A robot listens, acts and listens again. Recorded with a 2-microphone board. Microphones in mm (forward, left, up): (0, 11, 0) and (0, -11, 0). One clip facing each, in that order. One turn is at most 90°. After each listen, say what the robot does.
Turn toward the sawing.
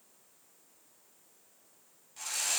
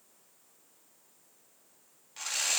Turn 35° right.
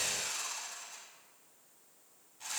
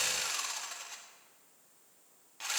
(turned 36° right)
Turn 90° right.
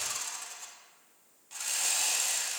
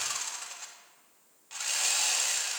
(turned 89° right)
Turn 20° right.
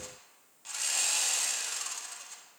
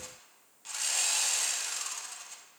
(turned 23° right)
Found it: sawing, straight ahead.